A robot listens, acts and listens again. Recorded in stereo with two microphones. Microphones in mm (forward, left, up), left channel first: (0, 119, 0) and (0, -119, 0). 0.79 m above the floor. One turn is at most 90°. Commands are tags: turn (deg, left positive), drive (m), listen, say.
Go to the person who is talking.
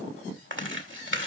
<listen/>
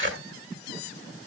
<listen/>
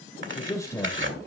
<turn deg="30"/>
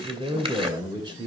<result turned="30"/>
<turn deg="-20"/>
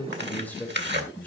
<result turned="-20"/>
<drive m="1.0"/>
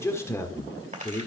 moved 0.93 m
<turn deg="10"/>
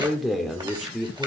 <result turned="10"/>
<drive m="1.0"/>
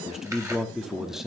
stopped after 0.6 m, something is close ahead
<say>I am next to the man speaking.</say>